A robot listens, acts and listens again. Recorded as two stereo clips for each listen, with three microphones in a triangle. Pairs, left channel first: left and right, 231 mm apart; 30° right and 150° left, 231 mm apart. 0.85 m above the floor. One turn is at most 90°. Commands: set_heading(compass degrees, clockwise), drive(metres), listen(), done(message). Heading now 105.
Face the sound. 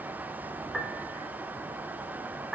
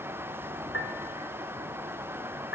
done("Found it: a piano, straight ahead, 2 to 4 m away.")